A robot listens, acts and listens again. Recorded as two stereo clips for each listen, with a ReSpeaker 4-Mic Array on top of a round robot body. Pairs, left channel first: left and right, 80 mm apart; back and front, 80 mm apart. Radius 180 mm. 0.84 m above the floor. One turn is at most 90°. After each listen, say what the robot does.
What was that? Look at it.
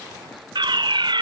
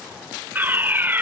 Turn 65° right.
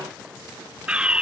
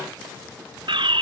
Turn 10° right.
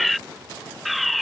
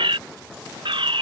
Found it: a fire alarm, straight ahead.